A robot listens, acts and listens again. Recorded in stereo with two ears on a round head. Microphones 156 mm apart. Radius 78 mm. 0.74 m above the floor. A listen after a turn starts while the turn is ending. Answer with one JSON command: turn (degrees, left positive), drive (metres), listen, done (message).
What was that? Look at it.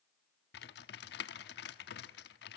{"turn": 65}
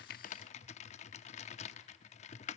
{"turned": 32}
{"turn": 40}
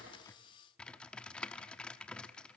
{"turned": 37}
{"done": "Found it: typing on a keyboard, straight ahead."}